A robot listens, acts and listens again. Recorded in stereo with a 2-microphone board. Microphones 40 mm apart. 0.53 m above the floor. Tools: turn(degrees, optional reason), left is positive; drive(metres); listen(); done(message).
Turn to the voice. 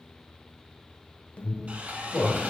turn(degrees=40, reason="The man speaking: about 40° left or 140° left.")
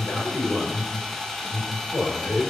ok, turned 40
turn(degrees=95, reason="So it is at 95° left.")
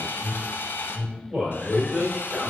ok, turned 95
turn(degrees=-10, reason="The man speaking is now 10° right.")
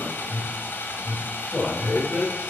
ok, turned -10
done("Found it: a man speaking, straight ahead.")